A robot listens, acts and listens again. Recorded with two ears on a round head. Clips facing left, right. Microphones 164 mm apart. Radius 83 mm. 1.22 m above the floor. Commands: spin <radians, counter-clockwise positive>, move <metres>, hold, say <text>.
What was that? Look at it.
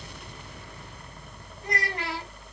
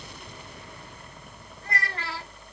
spin 0.52
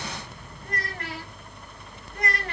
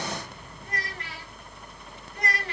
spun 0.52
spin 2.36
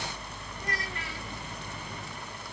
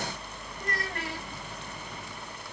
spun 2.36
hold
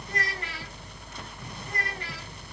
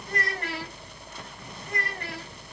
spin -0.79
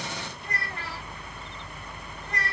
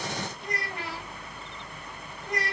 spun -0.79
spin -0.17
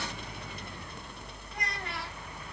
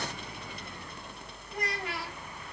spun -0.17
hold
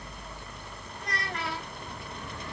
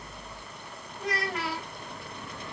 say Found it: a child speaking, straight ahead, over 4 m away.